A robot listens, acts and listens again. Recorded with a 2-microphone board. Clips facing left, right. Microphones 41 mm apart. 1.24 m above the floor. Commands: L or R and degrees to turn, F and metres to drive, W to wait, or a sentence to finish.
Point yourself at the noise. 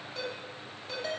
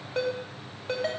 R40
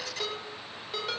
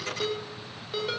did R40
Facing the ringtone.